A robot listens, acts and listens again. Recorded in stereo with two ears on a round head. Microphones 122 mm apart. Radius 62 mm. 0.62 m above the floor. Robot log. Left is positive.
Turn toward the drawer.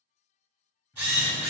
note: The drawer: about 15° left or 165° left.
cmd yaw +15
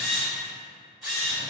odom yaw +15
cmd idle
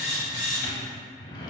note: So it is at 150° left.
cmd yaw +150
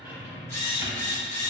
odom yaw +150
note: The drawer is now 15° right.
cmd yaw -15
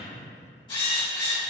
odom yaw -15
end: Found it: a drawer, straight ahead, under 1 m away.